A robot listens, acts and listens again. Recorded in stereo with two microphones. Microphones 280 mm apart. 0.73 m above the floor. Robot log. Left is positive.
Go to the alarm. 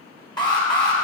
cmd yaw +30
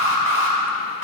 note: So it is at 135° left.
cmd yaw +135
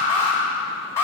note: The alarm is now 10° left.
cmd yaw +10
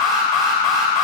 cmd fwd 1.0
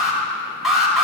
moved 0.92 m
cmd fwd 1.0
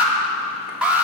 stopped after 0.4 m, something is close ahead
end: Arrived at the alarm, straight ahead.